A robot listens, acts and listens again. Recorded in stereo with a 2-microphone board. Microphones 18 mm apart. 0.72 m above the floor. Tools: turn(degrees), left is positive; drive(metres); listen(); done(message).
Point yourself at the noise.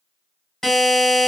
turn(degrees=15)
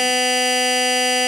done("Found it: a buzzer, straight ahead.")